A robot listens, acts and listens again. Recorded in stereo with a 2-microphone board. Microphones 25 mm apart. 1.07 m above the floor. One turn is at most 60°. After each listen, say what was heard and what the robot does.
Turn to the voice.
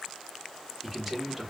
Turn 30° left.
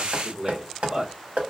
So it is at 35° right. Turn 35° right.
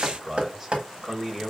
The man speaking is now 10° right. Turn 10° right.
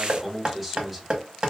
Found it: a man speaking, straight ahead, 1 to 2 m away.